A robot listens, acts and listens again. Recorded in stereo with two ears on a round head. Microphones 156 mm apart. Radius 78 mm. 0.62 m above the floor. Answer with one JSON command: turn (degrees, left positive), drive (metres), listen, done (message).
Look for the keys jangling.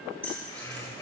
{"turn": 30}
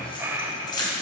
{"turn": 155}
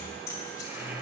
{"listen": true}
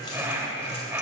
{"listen": true}
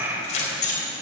{"turn": 50}
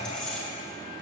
{"listen": true}
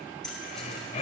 {"done": "Found it: keys jangling, straight ahead."}